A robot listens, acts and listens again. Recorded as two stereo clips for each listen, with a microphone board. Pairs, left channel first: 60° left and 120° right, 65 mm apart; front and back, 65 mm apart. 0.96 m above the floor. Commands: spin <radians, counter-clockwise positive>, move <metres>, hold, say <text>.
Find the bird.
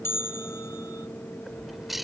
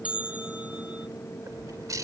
spin 2.71
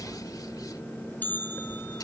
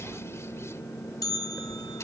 spin 0.79
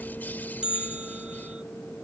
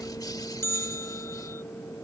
hold
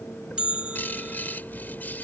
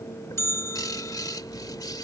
say Facing the bird.